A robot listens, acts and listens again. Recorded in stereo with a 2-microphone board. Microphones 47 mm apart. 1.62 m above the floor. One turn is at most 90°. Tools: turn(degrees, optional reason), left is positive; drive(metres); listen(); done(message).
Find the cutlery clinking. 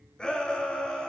listen()
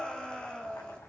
listen()
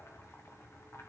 done("I can't make out cutlery clinking, only boiling and a shout.")